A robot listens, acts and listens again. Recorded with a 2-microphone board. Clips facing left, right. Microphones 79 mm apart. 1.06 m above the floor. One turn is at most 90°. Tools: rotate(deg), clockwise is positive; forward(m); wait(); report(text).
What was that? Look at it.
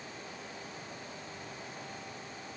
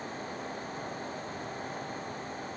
wait()
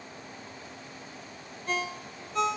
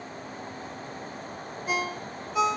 rotate(30)
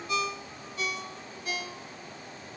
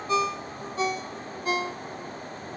rotate(90)
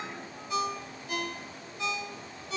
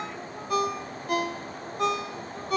rotate(60)
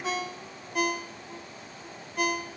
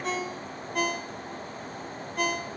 report("Facing the ringtone, under 1 m away.")